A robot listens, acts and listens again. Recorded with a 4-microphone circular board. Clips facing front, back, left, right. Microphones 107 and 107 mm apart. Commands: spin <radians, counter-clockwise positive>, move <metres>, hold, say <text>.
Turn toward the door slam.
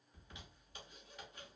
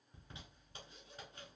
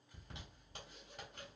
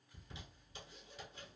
hold
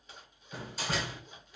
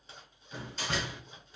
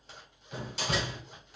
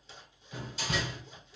spin 1.48
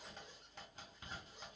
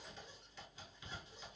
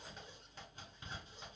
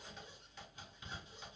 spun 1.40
say I heard a door slam from this way, but can't make it out now.